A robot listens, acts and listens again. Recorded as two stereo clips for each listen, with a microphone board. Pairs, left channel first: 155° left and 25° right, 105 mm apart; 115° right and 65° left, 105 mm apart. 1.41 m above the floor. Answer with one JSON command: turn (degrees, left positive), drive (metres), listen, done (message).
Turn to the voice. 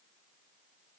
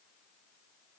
{"listen": true}
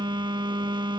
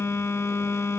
{"listen": true}
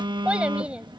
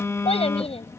{"turn": -100}
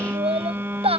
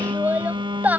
{"done": "Found it: a child speaking, straight ahead."}